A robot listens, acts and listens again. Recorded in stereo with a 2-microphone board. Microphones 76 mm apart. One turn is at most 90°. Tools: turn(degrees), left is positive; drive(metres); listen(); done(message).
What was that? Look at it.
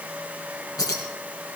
turn(degrees=50)
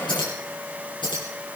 turn(degrees=85)
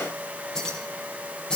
turn(degrees=10)
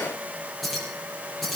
done("Facing the keys jangling.")